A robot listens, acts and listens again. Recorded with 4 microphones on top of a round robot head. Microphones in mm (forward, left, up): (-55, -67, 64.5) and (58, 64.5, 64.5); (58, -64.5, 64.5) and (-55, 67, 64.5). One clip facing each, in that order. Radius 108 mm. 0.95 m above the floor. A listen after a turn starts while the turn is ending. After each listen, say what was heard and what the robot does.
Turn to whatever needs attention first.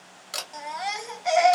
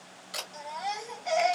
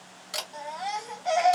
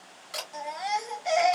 The baby crying: 160° right. Turn 160° right.
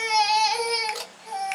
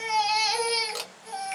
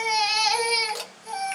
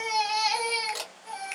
The baby crying is now 10° right. Turn 10° right.
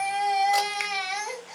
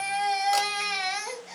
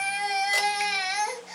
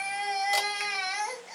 Facing the baby crying.